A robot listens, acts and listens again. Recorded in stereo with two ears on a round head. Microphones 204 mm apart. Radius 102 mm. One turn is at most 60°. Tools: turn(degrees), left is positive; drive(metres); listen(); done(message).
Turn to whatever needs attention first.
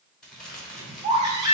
turn(degrees=-20)
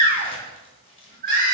turn(degrees=-60)
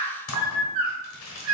turn(degrees=-60)
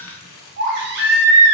turn(degrees=-60)
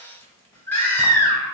turn(degrees=10)
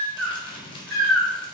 done("Facing the baby crying, 1 to 2 m away.")